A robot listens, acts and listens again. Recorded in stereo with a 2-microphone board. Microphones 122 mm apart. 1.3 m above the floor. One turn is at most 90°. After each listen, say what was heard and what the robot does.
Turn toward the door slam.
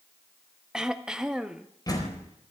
The door slam: about 35° left or 145° left. Turn 35° left.
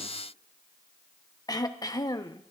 Keep listening.
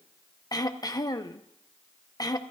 I heard a door slam, but can't make it out now. It was about straight ahead or 110° left.